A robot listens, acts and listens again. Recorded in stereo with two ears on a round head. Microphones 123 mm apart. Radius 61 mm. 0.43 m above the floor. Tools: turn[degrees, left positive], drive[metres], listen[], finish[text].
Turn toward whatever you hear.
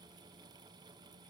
Action: listen[]
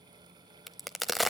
Action: turn[30]
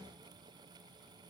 Action: listen[]
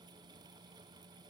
Action: finish[I heard a crack, but can't make it out now. It was about 30° right or 150° left.]